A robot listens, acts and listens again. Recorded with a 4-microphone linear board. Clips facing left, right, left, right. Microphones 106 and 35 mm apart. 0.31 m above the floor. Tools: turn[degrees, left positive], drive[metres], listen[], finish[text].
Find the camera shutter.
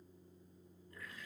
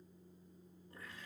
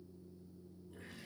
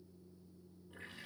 Action: listen[]
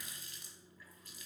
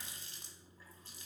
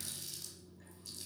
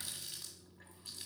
Action: listen[]
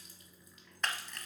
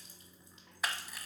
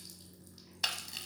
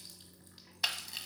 Action: turn[-30]
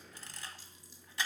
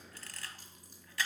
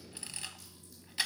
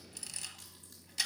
Thought: So it is at 25° left.
Action: turn[25]
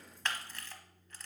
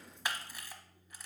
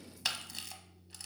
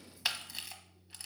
Thought: The camera shutter is now 15° right.
Action: turn[-15]
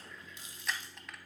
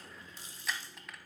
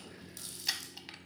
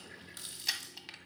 Action: finish[Facing the camera shutter, under 1 m away.]